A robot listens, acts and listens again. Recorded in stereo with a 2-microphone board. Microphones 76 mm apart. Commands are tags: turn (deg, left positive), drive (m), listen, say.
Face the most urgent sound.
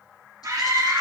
<turn deg="-45"/>
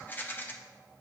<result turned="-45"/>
<listen/>
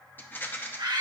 <turn deg="-85"/>
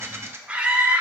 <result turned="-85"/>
<turn deg="-20"/>
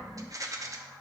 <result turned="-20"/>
<listen/>
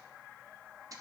<listen/>
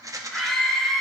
<say>Found it: a scream, straight ahead, 1 to 2 m away.</say>